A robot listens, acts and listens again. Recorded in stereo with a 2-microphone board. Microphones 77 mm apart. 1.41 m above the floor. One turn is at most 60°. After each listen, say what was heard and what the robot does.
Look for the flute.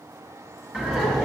Keep listening.
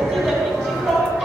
Keep listening.
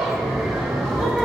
I can't make out a flute to turn to.